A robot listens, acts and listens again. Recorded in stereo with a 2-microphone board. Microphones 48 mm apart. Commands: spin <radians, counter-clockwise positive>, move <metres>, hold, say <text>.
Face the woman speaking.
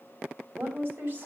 spin -0.70
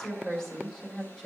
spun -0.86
spin 0.17
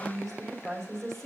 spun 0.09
say Found it: a woman speaking, straight ahead, 2 to 4 m away.